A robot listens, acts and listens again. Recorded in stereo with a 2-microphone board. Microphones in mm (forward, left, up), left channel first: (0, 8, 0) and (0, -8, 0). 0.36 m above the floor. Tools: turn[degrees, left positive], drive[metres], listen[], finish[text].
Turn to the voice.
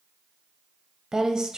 Thought: The woman speaking: about 45° right or 135° right.
Action: turn[-45]
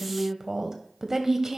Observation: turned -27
Thought: So it is at 30° right.
Action: turn[-30]
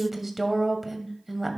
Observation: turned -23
Thought: The woman speaking is now 10° right.
Action: turn[-10]
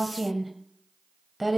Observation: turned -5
Action: finish[Found it: a woman speaking, straight ahead.]